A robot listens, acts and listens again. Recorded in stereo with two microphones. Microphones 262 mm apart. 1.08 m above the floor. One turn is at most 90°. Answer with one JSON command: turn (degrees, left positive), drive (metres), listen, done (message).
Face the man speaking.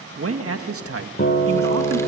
{"turn": -60}
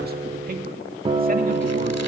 {"listen": true}
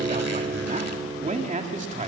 {"turn": -25}
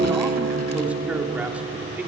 {"done": "Facing the man speaking, 2 to 4 m away."}